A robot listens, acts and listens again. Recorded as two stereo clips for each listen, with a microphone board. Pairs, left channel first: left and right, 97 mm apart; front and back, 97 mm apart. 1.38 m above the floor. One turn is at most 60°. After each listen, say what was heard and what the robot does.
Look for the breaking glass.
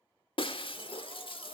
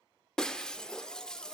The breaking glass: 80° left. Turn 60° left.
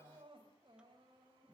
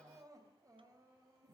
Nothing new. It was at 20° left. Turn 20° left.
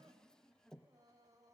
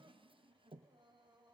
Facing where the breaking glass came from. I can't hear it now.